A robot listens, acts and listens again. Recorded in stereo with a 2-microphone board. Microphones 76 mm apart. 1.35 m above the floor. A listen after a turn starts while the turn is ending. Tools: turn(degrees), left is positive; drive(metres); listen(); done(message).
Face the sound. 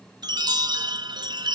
turn(degrees=-65)
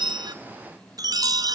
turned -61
turn(degrees=-55)
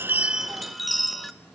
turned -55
done("Facing the chime.")